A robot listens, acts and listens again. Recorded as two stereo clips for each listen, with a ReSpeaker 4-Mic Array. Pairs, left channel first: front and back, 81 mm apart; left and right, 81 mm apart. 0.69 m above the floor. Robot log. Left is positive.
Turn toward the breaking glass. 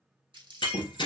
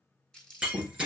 note: The breaking glass: 15° right.
cmd yaw -15
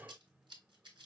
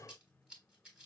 end: I heard breaking glass from this way, but can't make it out now.